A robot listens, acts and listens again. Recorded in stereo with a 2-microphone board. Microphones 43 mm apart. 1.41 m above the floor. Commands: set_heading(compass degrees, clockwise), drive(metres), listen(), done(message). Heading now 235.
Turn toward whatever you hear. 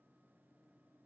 listen()
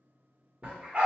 set_heading(260)
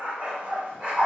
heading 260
set_heading(295)
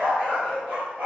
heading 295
set_heading(60)
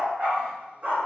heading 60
set_heading(110)
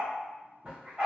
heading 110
set_heading(140)
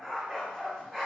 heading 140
done("Found it: a dog barking, straight ahead.")